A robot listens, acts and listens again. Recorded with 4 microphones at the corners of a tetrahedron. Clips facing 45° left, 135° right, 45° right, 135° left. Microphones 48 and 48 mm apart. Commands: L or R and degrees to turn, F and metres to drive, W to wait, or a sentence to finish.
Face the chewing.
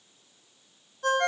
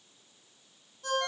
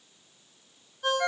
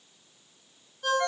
W
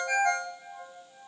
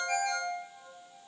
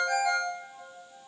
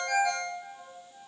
W
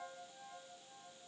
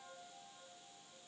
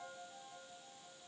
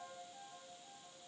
I can't make out chewing to turn to.